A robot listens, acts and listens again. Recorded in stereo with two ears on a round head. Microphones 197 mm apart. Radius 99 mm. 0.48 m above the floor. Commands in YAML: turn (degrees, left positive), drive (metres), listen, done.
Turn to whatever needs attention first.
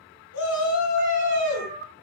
turn: 75
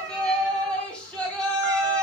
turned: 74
done: "Found it: a shout, straight ahead."